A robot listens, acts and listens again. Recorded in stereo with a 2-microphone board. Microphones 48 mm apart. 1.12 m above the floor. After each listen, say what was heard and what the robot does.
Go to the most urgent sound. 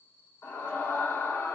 Turn 90° left.
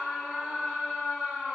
So it is at 10° left. Turn 10° left.
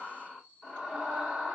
Drive 1.0 m forward.
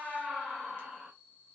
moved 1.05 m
Drive 1.0 m forward.
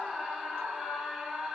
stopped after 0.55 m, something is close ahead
I am next to the scream.